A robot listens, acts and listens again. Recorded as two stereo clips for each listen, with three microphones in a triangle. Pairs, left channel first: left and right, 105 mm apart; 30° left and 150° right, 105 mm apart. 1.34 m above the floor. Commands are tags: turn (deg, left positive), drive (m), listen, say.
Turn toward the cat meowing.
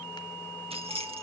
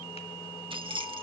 <listen/>
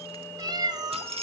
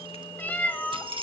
<turn deg="-45"/>
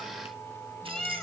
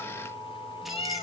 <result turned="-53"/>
<say>Facing the cat meowing, 2 to 4 m away.</say>